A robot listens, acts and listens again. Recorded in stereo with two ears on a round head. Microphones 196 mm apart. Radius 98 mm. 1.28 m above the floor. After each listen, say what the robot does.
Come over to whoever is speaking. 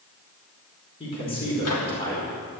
Turn 25° left.
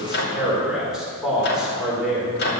Drive 1.0 m forward.
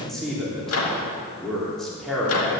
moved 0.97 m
Drive 1.0 m forward.
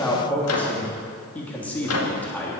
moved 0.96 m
Drive 1.0 m forward.
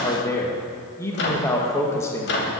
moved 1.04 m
Turn 15° left.
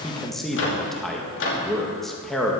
Drive 1.0 m forward.
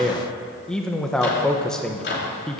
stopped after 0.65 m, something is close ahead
Arrived at the man speaking, straight ahead.